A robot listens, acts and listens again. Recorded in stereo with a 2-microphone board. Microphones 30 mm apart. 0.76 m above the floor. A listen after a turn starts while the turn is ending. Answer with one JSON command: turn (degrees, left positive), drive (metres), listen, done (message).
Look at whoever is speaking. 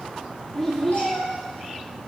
{"turn": 30}
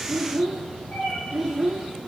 {"turn": -15}
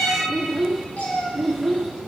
{"done": "Facing the child speaking."}